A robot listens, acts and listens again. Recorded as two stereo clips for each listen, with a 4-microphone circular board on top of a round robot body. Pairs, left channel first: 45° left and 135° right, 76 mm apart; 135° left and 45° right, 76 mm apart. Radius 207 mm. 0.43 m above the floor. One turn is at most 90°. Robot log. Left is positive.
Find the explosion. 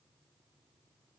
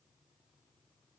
cmd idle
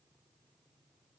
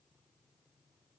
cmd idle
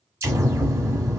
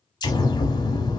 note: The explosion: 170° left.
cmd yaw +90
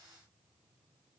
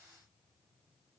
note: Nothing new. It was at 80° left.
cmd yaw +80
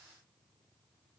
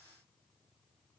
end: Facing where the explosion came from. I can't hear it now.